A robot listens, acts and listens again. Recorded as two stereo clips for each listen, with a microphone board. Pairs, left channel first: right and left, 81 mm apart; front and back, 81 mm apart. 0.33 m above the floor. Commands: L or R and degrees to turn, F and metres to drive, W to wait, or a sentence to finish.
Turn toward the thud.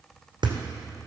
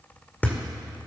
L70
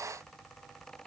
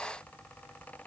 I heard a thud from this way, but can't make it out now.